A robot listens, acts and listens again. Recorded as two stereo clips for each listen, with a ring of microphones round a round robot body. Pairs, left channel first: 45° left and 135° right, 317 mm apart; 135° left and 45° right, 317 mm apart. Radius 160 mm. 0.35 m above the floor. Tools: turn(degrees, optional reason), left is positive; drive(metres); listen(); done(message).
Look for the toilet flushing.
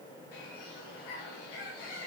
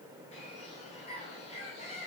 listen()
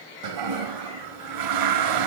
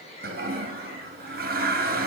turn(degrees=-110, reason="The toilet flushing: 110° right.")
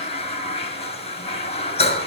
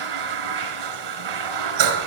turn(degrees=-30, reason="The toilet flushing is now 30° right.")
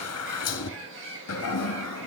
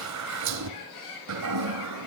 done("Found it: a toilet flushing, straight ahead, 2 to 4 m away.")